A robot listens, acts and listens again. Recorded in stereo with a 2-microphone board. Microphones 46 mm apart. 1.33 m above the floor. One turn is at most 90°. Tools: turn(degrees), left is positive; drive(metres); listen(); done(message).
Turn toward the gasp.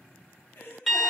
turn(degrees=50)
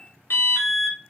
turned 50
listen()
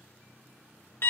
done("I heard a gasp, but can't make it out now. It was about straight ahead or 80° left.")